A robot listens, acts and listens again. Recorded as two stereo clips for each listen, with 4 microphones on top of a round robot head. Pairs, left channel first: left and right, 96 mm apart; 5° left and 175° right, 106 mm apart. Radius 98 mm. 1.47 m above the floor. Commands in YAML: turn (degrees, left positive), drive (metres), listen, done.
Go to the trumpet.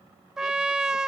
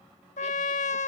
drive: 1.0
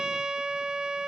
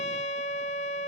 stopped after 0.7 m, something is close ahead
turn: -10
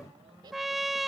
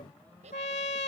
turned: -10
done: "I am next to the trumpet."